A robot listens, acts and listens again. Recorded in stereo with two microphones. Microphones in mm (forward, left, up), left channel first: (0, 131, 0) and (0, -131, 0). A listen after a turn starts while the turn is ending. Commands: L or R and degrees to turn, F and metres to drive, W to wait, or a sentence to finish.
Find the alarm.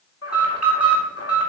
L65
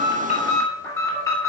L10
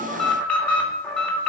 Facing the alarm.